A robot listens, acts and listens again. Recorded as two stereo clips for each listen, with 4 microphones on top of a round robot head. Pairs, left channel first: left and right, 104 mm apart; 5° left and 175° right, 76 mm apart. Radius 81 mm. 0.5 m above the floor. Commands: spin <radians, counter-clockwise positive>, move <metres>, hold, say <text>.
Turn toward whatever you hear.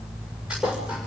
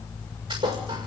spin -3.05
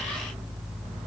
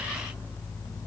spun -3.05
say Facing where the thud came from. I can't hear it now.